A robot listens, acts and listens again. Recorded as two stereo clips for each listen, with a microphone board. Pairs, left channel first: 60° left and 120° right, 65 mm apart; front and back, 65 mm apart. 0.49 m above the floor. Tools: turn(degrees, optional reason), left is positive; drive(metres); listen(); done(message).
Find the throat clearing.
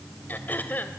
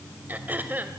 turn(degrees=120, reason="The throat clearing: 120° left.")
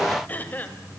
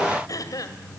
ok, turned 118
done("Found it: throat clearing, straight ahead, 2 to 4 m away.")